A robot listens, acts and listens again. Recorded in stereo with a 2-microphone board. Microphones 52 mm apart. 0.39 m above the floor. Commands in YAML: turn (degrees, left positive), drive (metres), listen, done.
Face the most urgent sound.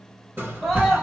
turn: -30
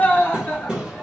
turn: 30
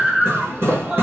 turn: -15
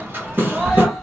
done: "Found it: a scream, straight ahead, 1 to 2 m away."